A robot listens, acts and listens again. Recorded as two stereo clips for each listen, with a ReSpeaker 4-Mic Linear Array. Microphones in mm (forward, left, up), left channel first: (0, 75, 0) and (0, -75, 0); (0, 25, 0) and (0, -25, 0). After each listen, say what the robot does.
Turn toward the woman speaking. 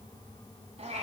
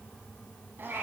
Keep listening.
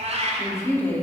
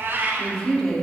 Turn 30° left.
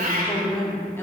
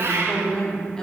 Turn 30° left.
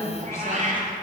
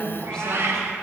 Turn 20° left.
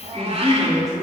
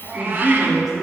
Turn 30° left.
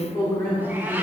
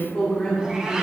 Turn 160° left.
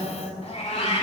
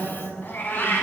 Turn 15° left.
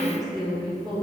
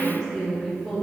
Found it: a woman speaking, straight ahead.